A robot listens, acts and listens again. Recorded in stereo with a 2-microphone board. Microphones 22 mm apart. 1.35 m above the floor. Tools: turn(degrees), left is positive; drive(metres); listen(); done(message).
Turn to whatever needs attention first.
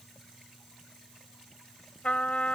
listen()
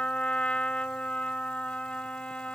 listen()
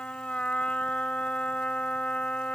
done("I can't make out anything urgent to turn to.")